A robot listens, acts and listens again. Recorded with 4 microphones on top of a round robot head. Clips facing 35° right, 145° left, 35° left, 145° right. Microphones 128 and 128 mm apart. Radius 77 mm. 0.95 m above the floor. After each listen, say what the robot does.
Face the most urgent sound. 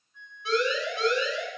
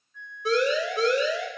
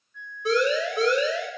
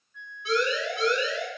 Turn 90° left.
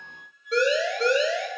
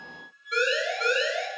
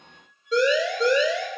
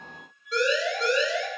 Turn 25° left.
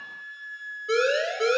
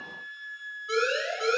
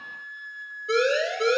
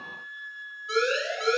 Found it: a siren, straight ahead, over 4 m away.